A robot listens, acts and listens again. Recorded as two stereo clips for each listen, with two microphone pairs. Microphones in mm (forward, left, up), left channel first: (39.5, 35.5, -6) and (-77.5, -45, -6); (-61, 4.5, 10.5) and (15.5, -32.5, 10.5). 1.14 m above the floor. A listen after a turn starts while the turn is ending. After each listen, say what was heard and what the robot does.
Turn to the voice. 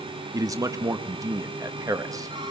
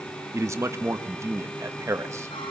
The man speaking: 80° right. Turn 80° right.
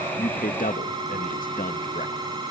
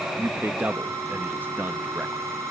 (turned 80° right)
The man speaking is now 40° left. Turn 40° left.
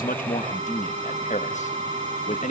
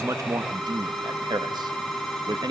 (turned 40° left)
Found it: a man speaking, straight ahead, 1 to 2 m away.